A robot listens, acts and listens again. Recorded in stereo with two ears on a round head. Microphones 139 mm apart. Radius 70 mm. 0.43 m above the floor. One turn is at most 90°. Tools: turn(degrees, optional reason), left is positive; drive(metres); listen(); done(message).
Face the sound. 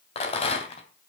turn(degrees=40, reason="The rattle: about 40° left or 140° left.")
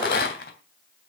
turn(degrees=90, reason="So it is at 100° left.")
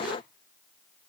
turn(degrees=10, reason="Nothing new. It was at 10° left.")
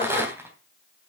turn(degrees=-15, reason="The rattle is now 15° right.")
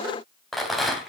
done("Found it: a rattle, straight ahead, 2 to 4 m away.")